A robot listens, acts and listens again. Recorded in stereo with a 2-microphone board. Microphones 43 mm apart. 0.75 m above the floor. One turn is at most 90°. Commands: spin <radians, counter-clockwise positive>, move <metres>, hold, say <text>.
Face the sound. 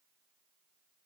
hold
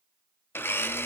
spin 1.05
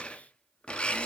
spin 0.52
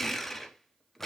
spin 0.17
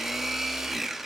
say Facing the blender, under 1 m away.